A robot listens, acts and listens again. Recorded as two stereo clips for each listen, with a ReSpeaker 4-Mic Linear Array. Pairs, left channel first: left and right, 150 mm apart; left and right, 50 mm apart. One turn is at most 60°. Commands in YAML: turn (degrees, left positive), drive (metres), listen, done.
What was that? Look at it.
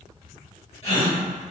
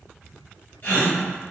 turn: 40
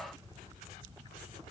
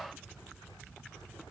listen: true
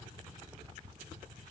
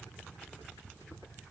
done: "I heard a gasp, but can't make it out now. It was about straight ahead or 100° left."